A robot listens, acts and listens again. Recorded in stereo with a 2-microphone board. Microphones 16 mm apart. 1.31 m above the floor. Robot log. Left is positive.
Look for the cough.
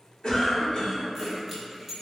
note: The cough: about 45° left or 135° left.
cmd yaw +45
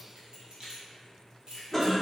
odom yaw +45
note: So it is at 10° left.
cmd yaw +10
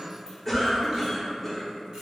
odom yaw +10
end: Found it: a cough, straight ahead, under 1 m away.